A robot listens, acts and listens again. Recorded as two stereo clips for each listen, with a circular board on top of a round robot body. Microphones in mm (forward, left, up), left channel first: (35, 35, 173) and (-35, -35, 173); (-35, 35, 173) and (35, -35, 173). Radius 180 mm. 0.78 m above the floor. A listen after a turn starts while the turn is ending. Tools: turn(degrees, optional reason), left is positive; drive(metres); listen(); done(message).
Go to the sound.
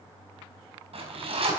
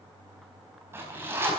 turn(degrees=-115, reason="The zipper: 115° right.")
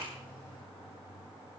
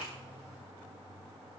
listen()
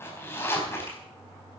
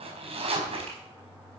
turn(degrees=-20, reason="The zipper is now 20° right.")
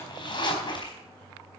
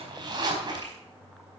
drive(metres=1.0)
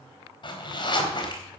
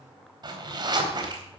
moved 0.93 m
drive(metres=1.0)
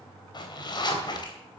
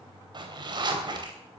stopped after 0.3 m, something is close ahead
done("Blocked. The zipper is further on, straight ahead.")